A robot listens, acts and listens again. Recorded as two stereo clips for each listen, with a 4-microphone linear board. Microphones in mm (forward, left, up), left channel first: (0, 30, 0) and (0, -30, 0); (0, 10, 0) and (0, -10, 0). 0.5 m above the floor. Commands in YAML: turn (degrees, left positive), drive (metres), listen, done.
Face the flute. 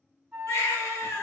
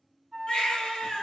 turn: -20
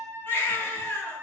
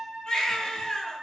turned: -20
turn: -140
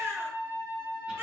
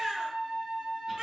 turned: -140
turn: -45
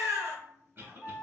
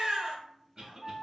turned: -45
done: "Found it: a flute, straight ahead, 1 to 2 m away."